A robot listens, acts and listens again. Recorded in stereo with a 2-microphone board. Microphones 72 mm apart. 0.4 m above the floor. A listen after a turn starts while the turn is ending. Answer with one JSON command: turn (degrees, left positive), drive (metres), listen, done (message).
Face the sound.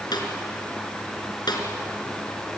{"turn": 90}
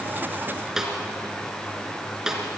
{"turn": -10}
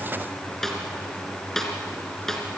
{"done": "Facing the snare drum, 2 to 4 m away."}